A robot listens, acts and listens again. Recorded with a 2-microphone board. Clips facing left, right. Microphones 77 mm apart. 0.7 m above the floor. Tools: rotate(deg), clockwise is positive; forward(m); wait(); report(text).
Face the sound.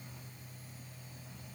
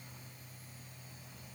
wait()
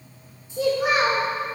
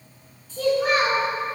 rotate(-30)
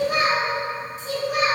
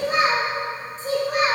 rotate(40)
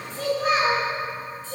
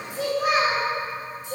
rotate(20)
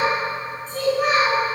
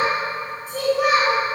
report("Found it: a child speaking, straight ahead.")